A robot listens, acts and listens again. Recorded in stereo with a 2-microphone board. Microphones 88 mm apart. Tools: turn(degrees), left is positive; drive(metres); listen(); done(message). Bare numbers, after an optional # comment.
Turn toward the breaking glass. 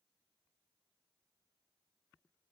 listen()
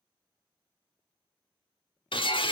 # The breaking glass: about 70° left or 110° left.
turn(70)
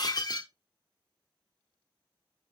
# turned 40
# So it is at 50° left.
turn(50)
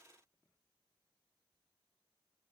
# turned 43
# Nothing new. It was at 10° left.
turn(10)
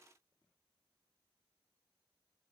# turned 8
done("I heard breaking glass from this way, but can't make it out now.")